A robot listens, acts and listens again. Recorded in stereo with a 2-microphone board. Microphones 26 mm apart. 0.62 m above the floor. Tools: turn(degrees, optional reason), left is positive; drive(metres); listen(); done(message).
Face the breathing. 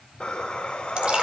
turn(degrees=50, reason="The breathing: about 50° left or 130° left.")
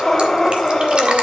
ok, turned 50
turn(degrees=10, reason="So it is at 10° left.")
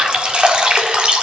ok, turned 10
listen()
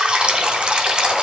listen()
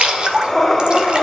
done("Found it: breathing, straight ahead, 2 to 4 m away.")